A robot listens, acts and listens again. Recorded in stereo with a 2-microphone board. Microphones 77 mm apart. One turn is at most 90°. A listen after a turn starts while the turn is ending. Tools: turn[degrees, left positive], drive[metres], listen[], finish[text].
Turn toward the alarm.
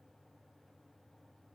Action: listen[]
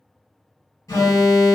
Thought: The alarm: about 45° left or 135° left.
Action: turn[45]
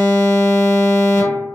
Thought: So it is at 80° left.
Action: turn[80]
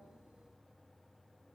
Action: listen[]
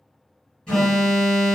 Thought: The alarm is now 15° left.
Action: turn[15]
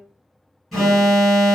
Action: finish[Found it: an alarm, straight ahead.]